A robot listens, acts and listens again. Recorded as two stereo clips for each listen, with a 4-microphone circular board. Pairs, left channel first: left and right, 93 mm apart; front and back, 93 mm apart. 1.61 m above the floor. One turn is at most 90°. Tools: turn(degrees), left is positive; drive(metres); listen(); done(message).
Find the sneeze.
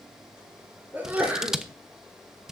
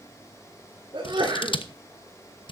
turn(degrees=-90)
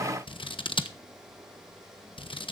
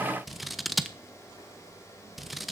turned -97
turn(degrees=-65)
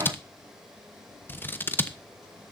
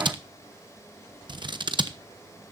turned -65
done("I heard a sneeze from this way, but can't make it out now.")